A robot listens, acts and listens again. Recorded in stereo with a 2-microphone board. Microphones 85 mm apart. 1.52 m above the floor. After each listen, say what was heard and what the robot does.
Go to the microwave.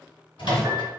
The microwave: about 75° left or 105° left. Turn 75° left.
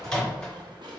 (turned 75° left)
Drive 1.0 m forward.
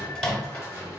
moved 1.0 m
Drive 1.0 m forward.
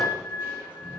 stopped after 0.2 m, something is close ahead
Keep listening.
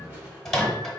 I am next to the microwave.